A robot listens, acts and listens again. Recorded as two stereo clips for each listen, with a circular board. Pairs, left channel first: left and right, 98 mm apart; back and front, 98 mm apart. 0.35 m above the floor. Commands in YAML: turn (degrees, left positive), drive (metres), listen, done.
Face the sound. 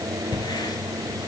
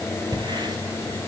listen: true
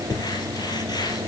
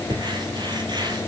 turn: 40
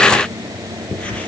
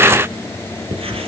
turn: 10
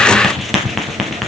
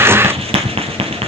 done: "Facing the writing."